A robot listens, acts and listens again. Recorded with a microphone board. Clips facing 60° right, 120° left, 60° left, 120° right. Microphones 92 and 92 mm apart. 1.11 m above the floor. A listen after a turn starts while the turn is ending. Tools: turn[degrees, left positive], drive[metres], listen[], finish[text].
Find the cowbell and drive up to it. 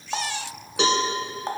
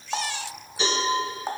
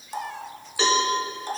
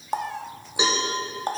Thought: The cowbell: 45° right.
Action: turn[-45]
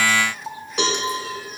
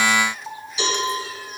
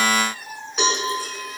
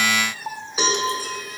Thought: The cowbell is now 30° right.
Action: turn[-30]
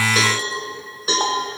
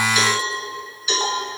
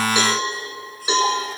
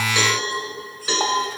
Thought: The cowbell is now 10° right.
Action: turn[-10]
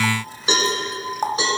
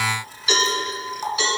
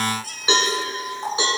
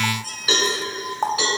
Action: drive[1.0]
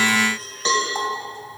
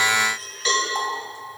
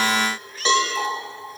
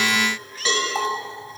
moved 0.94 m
Action: drive[1.0]
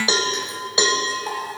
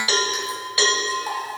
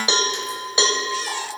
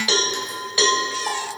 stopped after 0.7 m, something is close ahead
Action: finish[I am next to the cowbell.]